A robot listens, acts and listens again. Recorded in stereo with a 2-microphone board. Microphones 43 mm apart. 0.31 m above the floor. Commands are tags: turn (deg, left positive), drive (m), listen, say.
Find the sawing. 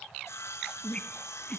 <turn deg="90"/>
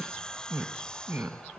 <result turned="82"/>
<turn deg="15"/>
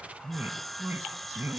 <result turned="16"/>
<say>Found it: sawing, straight ahead.</say>